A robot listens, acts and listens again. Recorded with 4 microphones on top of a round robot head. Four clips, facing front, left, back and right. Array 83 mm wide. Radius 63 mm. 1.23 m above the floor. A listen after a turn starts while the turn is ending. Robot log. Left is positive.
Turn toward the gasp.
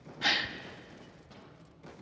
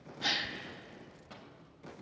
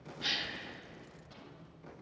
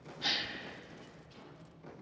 note: The gasp: 10° left.
cmd yaw +10
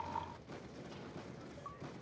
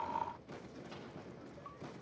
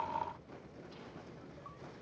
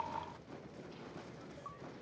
end: Facing where the gasp came from. I can't hear it now.